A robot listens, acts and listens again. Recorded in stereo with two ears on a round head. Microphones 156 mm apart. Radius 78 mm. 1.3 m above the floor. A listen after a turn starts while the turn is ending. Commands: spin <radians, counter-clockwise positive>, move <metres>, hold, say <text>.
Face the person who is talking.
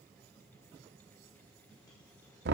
hold
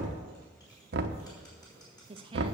spin -0.52
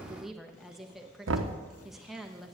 say Facing the woman speaking.